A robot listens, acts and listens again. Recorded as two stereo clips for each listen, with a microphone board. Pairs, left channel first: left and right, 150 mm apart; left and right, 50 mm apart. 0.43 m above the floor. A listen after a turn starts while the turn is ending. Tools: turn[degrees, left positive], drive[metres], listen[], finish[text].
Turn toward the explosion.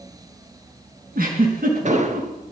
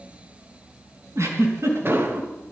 Thought: The explosion: about 55° right or 125° right.
Action: turn[-55]
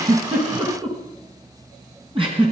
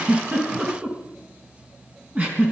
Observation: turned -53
Action: listen[]
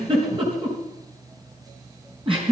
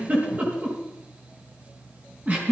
Action: finish[I heard an explosion, but can't make it out now. It was about straight ahead or 75° right.]